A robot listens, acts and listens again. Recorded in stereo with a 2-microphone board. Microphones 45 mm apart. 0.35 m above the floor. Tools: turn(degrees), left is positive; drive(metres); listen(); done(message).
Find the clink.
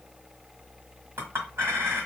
turn(degrees=-65)
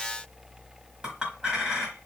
turn(degrees=-20)
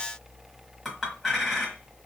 done("Found it: a clink, straight ahead, 1 to 2 m away.")